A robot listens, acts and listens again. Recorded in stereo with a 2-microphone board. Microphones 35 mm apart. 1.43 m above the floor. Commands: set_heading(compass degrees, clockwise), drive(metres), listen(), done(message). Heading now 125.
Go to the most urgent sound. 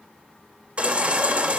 set_heading(160)
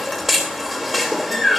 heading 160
drive(1.0)
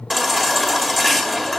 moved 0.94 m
drive(1.0)
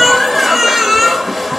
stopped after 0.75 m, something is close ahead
done("I am next to the baby crying.")